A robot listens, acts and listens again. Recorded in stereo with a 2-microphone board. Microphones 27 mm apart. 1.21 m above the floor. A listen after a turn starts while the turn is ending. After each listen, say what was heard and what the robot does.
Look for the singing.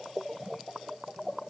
Keep listening.
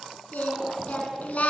The singing: about 60° left or 120° left. Turn 60° left.
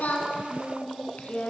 So it is at 65° left. Turn 65° left.
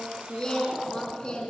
The singing is now 35° left. Turn 35° left.
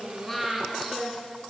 Facing the singing.